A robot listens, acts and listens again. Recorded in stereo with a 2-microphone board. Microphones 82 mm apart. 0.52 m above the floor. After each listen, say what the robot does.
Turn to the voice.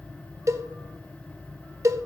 Keep listening.
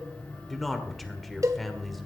Turn 30° left.
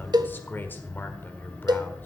Turn 145° left.
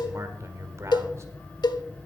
Turn 50° right.
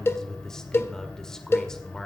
Turn 10° left.
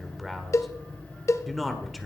Facing the man speaking.